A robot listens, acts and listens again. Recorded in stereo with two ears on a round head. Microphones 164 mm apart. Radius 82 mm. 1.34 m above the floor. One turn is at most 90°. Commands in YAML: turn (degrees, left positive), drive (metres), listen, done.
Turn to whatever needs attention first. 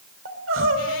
turn: -90
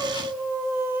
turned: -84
turn: -10
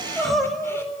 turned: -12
done: "Facing the crying, 2 to 4 m away."